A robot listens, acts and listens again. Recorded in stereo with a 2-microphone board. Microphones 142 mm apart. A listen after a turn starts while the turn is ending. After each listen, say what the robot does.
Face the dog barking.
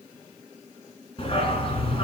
Turn 40° left.
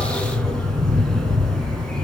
Facing the dog barking, 2 to 4 m away.